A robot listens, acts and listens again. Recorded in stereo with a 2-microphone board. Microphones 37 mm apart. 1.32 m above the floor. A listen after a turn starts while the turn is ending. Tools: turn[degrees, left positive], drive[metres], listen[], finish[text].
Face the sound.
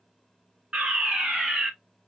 Thought: The fire alarm: about 30° right or 150° right.
Action: turn[-30]
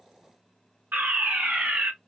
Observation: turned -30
Thought: So it is at 115° right.
Action: turn[-115]
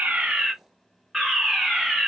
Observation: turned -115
Thought: The fire alarm is now 10° right.
Action: turn[-10]
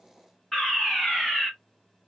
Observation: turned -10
Action: finish[Facing the fire alarm.]